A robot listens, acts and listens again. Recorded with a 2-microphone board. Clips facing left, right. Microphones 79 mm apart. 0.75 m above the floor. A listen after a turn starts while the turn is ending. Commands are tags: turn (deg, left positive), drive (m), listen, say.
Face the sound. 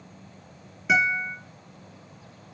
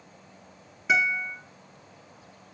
<turn deg="30"/>
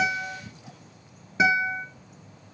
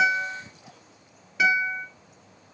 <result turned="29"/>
<turn deg="150"/>
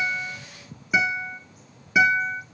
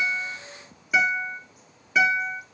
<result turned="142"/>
<say>Found it: a guitar, straight ahead.</say>